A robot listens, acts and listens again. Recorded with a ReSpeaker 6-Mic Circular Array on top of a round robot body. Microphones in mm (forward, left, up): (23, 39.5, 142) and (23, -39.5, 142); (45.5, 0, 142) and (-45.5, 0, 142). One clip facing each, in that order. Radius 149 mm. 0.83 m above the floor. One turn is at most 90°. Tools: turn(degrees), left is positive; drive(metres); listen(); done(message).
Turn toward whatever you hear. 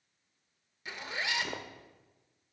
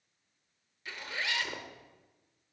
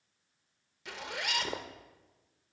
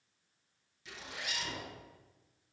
turn(degrees=20)
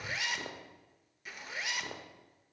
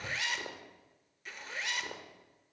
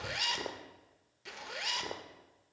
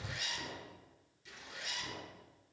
done("Found it: a zipper, straight ahead.")